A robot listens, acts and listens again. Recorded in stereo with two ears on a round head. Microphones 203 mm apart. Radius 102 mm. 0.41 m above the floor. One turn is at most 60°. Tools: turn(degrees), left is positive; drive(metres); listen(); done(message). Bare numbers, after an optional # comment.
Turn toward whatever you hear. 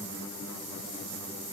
listen()
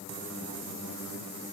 listen()
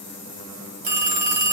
# The phone ringing: about 40° right or 140° right.
turn(-40)
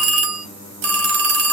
# So it is at 95° right.
turn(-60)
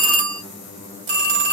# The phone ringing is now 50° right.
turn(-50)
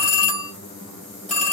done("Found it: a phone ringing, straight ahead.")